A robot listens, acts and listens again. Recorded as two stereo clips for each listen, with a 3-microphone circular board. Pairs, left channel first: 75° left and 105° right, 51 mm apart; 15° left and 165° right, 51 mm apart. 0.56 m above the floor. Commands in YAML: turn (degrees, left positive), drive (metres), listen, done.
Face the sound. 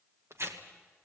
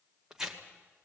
turn: -85
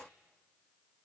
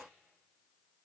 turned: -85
listen: true
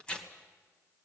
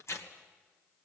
done: "Found it: tearing paper, straight ahead."